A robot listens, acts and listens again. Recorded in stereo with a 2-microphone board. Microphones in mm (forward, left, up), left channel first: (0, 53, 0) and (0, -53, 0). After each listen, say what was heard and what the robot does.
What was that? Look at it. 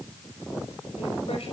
Keep listening.
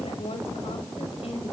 Turn 90° left.
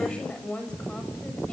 So it is at 10° left. Turn 10° left.
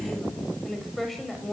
Found it: a woman speaking, straight ahead.